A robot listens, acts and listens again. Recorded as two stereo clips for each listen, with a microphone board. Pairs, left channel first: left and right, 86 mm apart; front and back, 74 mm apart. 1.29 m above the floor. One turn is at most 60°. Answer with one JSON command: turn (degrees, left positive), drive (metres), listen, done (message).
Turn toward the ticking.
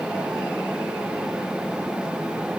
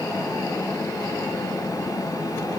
{"listen": true}
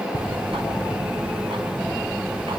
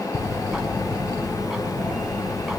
{"turn": -60}
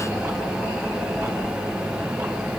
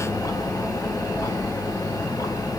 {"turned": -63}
{"turn": -30}
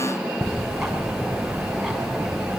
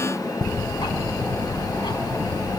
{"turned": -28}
{"done": "Found it: ticking, straight ahead."}